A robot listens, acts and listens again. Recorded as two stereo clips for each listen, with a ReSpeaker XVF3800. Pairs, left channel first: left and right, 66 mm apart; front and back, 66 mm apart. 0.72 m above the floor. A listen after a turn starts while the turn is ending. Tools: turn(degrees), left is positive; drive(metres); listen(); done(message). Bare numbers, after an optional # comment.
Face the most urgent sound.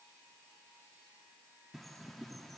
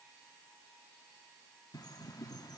listen()
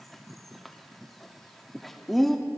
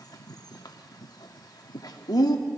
listen()
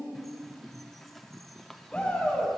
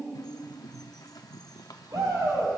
# The shout: 160° left.
turn(160)
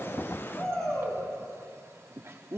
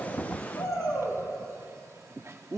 # The shout is now 25° left.
turn(25)
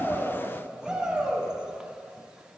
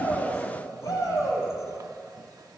# The shout is now 10° right.
turn(-10)
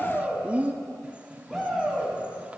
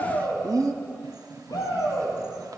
done("Found it: a shout, straight ahead.")